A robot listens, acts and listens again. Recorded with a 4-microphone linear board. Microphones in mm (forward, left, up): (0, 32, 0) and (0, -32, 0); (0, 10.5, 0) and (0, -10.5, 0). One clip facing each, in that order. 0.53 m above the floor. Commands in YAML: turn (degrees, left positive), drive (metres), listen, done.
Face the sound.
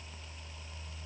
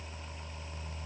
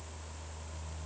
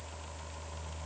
listen: true
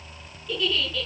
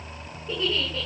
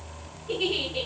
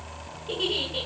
turn: -30
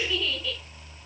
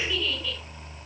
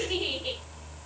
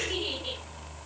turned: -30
done: "Facing the giggle, over 4 m away."